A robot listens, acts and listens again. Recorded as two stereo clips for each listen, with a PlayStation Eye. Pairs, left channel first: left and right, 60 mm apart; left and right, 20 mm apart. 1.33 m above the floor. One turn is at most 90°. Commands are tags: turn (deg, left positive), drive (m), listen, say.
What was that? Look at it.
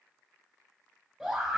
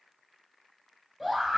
<turn deg="-30"/>
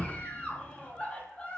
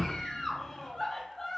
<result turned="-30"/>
<turn deg="20"/>
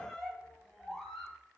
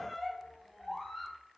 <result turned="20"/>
<say>Facing the scream.</say>